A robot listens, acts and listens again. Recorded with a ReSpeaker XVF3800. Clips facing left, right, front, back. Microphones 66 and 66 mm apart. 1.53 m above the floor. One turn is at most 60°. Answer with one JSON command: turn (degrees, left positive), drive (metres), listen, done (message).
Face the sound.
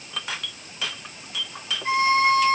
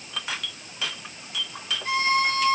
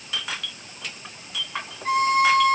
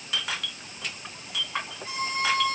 {"turn": 25}
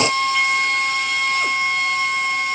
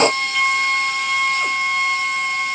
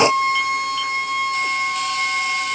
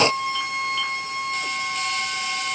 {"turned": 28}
{"done": "Found it: a violin, straight ahead, 2 to 4 m away."}